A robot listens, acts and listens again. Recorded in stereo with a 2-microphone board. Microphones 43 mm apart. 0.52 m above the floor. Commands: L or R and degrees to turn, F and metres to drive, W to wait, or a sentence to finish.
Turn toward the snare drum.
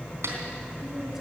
R70
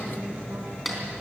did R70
Found it: a snare drum, straight ahead.